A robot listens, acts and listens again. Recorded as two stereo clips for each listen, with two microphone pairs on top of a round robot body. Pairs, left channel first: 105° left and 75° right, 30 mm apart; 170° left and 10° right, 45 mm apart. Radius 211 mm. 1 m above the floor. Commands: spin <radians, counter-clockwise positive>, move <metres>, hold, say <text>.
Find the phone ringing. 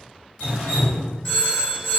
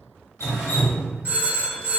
spin 0.79
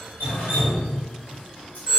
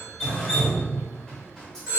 say Found it: a phone ringing, straight ahead.